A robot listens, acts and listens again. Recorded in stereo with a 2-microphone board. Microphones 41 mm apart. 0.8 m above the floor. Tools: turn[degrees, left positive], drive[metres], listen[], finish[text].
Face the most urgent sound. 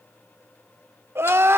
Action: turn[-90]
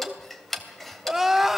Action: finish[Facing the crying.]